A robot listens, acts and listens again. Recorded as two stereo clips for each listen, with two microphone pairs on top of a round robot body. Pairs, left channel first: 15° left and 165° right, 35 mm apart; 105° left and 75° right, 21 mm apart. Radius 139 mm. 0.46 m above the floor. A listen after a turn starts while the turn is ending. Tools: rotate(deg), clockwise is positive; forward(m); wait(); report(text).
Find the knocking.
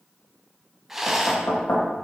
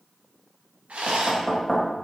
rotate(-20)
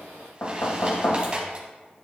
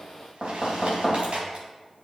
report("Facing the knocking, 2 to 4 m away.")